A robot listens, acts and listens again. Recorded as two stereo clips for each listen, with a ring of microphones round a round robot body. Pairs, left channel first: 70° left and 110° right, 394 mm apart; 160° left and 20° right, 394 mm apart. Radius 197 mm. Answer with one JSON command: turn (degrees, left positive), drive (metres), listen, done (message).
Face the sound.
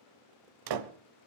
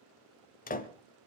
{"turn": -135}
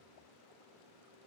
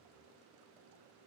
{"done": "Facing where the door slam came from. I can't hear it now."}